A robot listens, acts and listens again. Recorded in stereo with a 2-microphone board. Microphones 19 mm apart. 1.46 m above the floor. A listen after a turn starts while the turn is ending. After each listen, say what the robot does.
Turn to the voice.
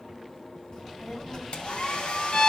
Turn 40° left.
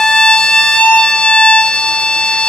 Keep listening.
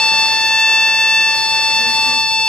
Keep listening.
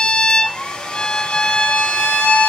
I heard a child speaking, but can't make it out now. It was about straight ahead or 100° left.